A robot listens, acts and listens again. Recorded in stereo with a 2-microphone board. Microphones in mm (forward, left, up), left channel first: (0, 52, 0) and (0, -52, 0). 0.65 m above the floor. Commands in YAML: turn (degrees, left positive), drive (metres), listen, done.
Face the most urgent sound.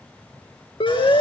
turn: 60
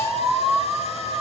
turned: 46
turn: 25
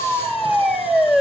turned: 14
turn: 15
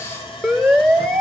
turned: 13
done: "Found it: a siren, straight ahead, 2 to 4 m away."